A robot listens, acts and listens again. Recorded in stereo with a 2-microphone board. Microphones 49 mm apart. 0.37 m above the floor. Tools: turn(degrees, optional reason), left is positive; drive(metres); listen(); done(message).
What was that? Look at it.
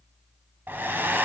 turn(degrees=-45, reason="The hair dryer: about 45° right or 135° right.")
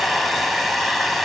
done("Found it: a hair dryer, straight ahead, 1 to 2 m away.")